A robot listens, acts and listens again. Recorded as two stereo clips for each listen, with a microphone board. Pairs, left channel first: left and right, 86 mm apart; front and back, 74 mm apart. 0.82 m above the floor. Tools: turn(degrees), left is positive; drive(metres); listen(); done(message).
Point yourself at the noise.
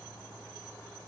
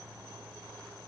listen()
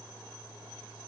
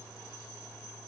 listen()
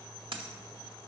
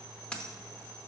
turn(degrees=-75)
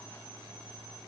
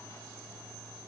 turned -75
done("I heard a dropped coin from this way, but can't make it out now.")